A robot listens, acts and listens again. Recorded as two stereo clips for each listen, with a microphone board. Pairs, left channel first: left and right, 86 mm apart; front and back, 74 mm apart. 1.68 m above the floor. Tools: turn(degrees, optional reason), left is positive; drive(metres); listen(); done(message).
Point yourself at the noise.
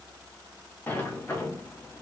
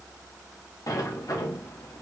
turn(degrees=25, reason="The sliding door: 25° left.")
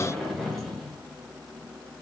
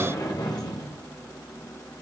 done("Found it: a sliding door, straight ahead.")